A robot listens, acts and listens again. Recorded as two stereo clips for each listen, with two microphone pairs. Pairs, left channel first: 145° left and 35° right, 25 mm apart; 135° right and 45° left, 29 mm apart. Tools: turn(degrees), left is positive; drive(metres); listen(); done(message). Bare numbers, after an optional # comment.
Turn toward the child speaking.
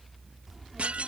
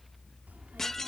# The child speaking: 45° left.
turn(45)
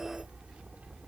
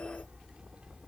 done("Found it: a child speaking, straight ahead.")